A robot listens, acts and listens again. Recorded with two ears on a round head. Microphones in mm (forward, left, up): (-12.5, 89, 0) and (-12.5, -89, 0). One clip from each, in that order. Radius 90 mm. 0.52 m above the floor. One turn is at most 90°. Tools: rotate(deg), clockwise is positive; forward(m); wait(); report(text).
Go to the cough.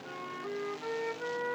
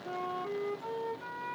wait()
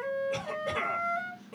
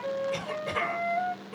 rotate(-30)
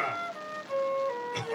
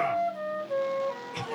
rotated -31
rotate(-90)
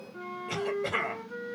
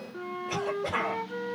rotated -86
rotate(-60)
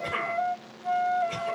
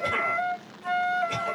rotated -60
wait()
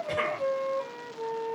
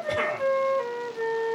wait()
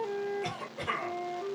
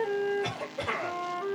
forward(1.0)
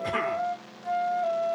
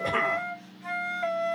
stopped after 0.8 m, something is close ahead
report("I am next to the cough.")